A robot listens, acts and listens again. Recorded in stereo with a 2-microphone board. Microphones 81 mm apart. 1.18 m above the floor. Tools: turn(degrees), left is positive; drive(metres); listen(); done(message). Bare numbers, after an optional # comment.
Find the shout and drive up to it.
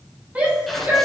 # The shout: about 20° right or 160° right.
turn(-20)
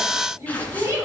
# So it is at 140° right.
turn(-140)
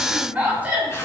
# The shout is now 20° right.
turn(-20)
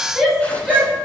drive(1.0)
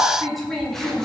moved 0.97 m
drive(1.0)
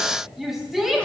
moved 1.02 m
drive(1.0)
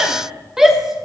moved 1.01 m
drive(1.0)
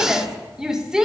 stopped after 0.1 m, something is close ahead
# The shout is now 10° right.
turn(-10)
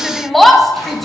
done("I am next to the shout.")